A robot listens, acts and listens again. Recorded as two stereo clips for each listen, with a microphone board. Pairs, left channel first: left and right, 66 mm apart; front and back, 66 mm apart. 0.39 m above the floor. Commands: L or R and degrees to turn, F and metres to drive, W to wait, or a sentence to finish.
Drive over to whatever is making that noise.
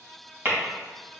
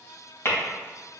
R40
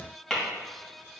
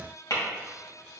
L10
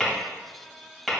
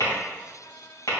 F1.0
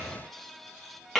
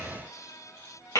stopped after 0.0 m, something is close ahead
Blocked. The tapping is further on, straight ahead.